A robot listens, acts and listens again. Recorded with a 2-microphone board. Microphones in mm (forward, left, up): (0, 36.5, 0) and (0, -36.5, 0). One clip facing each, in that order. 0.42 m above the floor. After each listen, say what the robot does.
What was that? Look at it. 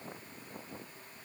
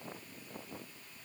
Keep listening.
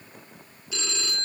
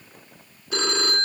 Turn 55° right.
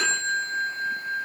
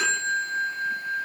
Facing the phone ringing.